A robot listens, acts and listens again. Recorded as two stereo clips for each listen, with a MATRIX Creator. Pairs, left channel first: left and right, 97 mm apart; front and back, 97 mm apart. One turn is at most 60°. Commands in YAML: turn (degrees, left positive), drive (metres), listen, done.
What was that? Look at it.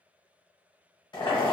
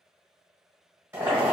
turn: 60
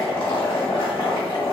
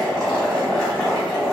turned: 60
turn: 60
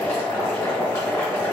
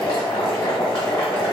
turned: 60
turn: 30
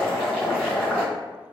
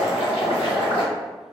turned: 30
turn: 10
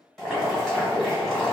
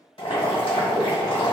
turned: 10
done: "Found it: boiling, straight ahead."